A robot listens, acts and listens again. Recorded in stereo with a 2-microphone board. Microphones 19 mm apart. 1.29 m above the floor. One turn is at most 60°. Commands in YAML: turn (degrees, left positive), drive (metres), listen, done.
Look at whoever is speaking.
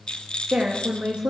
turn: -60
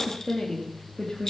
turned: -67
turn: 25
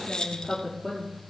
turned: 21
turn: 10
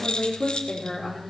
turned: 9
turn: 10
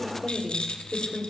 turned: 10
done: "Found it: a woman speaking, straight ahead, over 4 m away."